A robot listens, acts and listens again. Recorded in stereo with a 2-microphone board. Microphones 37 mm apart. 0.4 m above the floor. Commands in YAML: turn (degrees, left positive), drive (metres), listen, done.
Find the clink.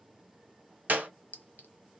turn: 55
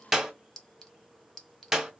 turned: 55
turn: 15
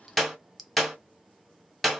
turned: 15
done: "Facing the clink, under 1 m away."